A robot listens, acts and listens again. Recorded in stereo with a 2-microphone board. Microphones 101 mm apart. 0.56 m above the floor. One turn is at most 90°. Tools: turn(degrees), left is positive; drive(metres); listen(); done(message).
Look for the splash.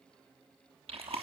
listen()
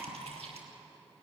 listen()
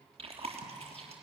done("I can't make out a splash, only chewing.")